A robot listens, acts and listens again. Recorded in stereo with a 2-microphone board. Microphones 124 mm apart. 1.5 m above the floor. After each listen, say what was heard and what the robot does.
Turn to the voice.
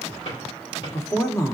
The woman speaking: about 25° left or 155° left. Turn 25° left.
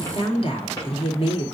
So it is at 130° left. Turn 130° left.
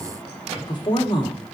The woman speaking is now 40° left. Turn 40° left.
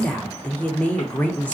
The woman speaking is now 15° left. Turn 15° left.
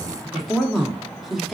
Facing the woman speaking, under 1 m away.